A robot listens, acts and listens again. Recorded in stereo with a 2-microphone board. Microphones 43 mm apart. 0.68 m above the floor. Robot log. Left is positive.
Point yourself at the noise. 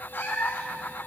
note: The cat meowing: about 55° left or 125° left.
cmd yaw +55
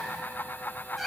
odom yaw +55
end: Facing the cat meowing.